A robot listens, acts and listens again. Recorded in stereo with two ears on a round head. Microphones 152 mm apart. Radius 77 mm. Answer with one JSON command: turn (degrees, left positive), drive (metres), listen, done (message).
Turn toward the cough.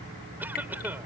{"turn": -30}
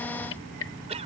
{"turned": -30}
{"turn": -140}
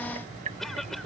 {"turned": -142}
{"done": "Facing the cough."}